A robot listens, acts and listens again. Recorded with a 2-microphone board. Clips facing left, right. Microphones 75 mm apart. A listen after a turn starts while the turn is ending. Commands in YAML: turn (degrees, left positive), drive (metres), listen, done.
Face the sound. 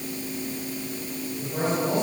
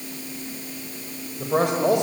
turn: -90
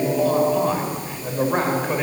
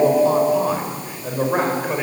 done: "Found it: a man speaking, straight ahead, over 4 m away."